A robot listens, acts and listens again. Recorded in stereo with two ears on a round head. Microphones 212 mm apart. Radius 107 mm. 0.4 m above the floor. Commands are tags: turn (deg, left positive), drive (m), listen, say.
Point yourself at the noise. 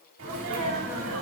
<turn deg="-65"/>
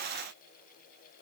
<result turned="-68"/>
<listen/>
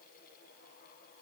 <say>I heard a sneeze, but can't make it out now. It was about 5° left or 45° right.</say>